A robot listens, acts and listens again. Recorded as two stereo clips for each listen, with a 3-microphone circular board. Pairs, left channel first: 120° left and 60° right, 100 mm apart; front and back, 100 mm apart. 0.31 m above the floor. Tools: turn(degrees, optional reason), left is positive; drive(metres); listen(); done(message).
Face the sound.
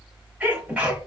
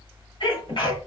turn(degrees=15, reason="The sneeze: 15° left.")
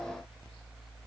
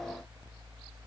done("I heard a sneeze from this way, but can't make it out now.")